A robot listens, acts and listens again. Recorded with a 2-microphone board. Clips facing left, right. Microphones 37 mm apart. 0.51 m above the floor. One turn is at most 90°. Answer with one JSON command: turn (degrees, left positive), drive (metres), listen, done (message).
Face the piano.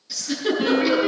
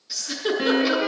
{"turn": -35}
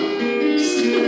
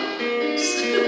{"done": "Facing the piano."}